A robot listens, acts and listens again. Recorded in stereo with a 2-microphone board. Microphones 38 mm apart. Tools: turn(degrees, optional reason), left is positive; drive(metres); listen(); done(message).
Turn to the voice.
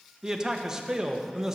turn(degrees=-30)
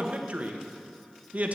turn(degrees=-140, reason="So it is at 140° right.")
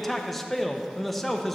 done("Facing the man speaking.")